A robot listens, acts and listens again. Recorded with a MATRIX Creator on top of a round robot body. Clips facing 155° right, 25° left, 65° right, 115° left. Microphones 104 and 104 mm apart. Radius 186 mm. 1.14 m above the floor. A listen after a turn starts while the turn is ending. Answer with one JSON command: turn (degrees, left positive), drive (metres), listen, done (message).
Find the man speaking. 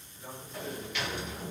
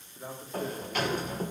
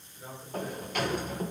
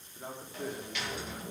{"turn": 65}
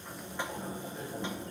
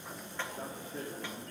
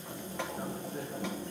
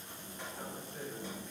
{"listen": true}
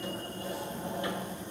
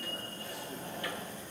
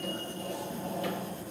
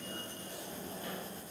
{"listen": true}
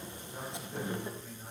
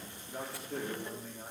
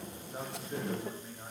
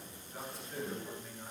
{"done": "Found it: a man speaking, straight ahead, over 4 m away."}